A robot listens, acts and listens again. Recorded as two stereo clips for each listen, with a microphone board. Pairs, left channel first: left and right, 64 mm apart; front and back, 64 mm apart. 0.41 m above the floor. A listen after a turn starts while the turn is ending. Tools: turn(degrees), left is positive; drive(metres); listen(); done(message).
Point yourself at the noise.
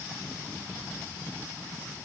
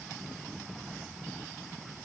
listen()
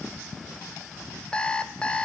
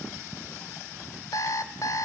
turn(degrees=15)
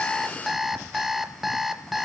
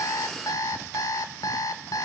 done("Found it: an alarm clock, straight ahead, under 1 m away.")